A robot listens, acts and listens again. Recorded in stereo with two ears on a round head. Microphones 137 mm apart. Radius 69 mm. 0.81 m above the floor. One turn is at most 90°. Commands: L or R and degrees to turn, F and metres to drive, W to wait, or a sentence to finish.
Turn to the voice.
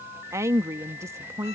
R20
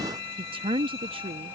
R90
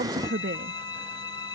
R75
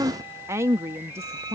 R20
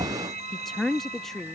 Found it: a woman speaking, straight ahead.